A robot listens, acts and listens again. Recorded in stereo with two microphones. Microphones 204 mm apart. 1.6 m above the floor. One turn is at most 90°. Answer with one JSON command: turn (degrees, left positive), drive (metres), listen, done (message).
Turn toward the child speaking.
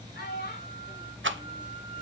{"turn": 55}
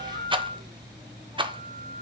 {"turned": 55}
{"listen": true}
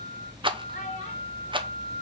{"listen": true}
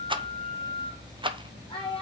{"turn": 25}
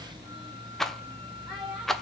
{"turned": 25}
{"done": "Found it: a child speaking, straight ahead."}